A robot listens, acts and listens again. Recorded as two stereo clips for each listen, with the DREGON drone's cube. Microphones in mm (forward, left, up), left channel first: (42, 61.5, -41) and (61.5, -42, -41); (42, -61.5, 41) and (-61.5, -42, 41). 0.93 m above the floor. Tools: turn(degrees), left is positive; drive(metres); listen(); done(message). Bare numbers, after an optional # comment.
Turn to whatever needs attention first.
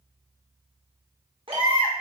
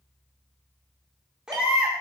# The baby crying: 110° right.
turn(-110)
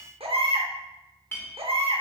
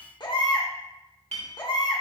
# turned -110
# The baby crying is now 55° right.
turn(-55)
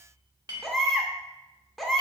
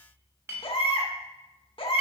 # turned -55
# The baby crying is now 10° left.
turn(10)
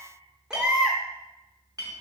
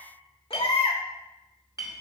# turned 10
done("Found it: a baby crying, straight ahead.")